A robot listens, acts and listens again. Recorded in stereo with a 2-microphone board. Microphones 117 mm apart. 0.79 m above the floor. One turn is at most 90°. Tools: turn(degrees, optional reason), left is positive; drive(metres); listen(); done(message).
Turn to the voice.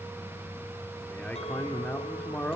turn(degrees=30)
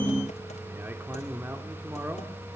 turn(degrees=-20, reason="So it is at 20° right.")
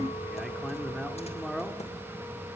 done("Facing the man speaking, 2 to 4 m away.")